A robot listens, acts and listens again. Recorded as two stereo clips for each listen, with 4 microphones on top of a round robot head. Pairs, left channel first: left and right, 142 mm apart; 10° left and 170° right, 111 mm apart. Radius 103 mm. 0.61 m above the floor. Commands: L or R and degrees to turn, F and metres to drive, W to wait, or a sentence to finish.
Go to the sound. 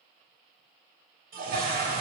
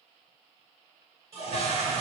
R105
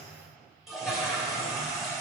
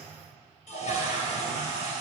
F1.0
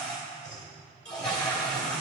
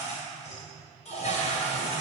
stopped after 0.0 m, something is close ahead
Something is in my way. I am facing the toilet flushing but have not reached it.